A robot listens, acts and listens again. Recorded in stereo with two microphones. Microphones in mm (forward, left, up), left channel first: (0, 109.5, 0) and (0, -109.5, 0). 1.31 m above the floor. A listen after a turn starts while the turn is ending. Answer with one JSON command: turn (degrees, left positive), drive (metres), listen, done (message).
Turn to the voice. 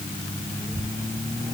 {"turn": 15}
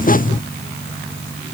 {"listen": true}
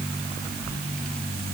{"turn": 30}
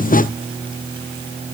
{"listen": true}
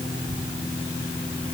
{"turn": -20}
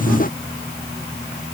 {"listen": true}
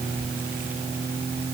{"done": "Facing the child speaking."}